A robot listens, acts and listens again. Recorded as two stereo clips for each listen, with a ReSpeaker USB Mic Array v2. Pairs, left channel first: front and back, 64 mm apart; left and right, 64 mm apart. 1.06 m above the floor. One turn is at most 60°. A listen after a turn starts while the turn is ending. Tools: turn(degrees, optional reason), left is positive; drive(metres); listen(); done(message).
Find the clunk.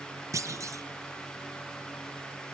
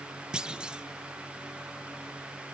turn(degrees=-60, reason="The clunk: 165° right.")
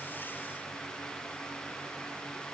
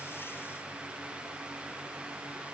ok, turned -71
turn(degrees=-60, reason="Nothing new. It was at 90° right.")
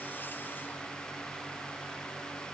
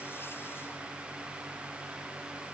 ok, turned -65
turn(degrees=-25, reason="Nothing new. It was at 25° right.")
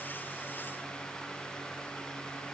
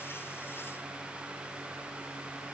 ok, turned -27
done("I heard a clunk from this way, but can't make it out now.")